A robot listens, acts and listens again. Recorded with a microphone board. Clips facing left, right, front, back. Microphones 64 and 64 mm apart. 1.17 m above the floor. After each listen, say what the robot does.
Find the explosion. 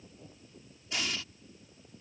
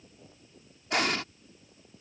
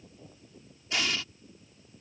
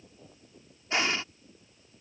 Turn 120° right.
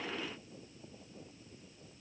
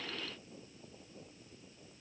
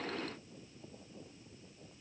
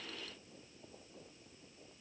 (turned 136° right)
Turn 15° left.
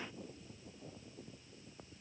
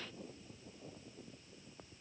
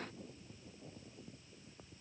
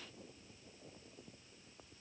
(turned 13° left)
Facing where the explosion came from. I can't hear it now.